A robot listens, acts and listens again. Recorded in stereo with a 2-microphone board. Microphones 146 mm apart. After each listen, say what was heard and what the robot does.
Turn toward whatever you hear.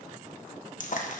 The frying: about 60° left or 120° left. Turn 60° left.
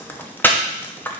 So it is at 15° left. Turn 15° left.
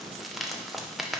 Keep listening.
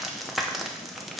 Facing the frying, under 1 m away.